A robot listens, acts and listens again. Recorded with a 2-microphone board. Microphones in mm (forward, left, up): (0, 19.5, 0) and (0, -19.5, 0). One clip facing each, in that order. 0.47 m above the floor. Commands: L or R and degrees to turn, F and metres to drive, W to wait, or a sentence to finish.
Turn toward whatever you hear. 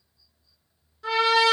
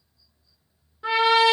R25
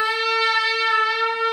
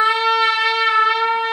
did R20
R135
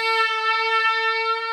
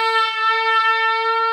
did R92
R45
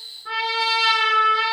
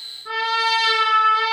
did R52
Facing the trumpet.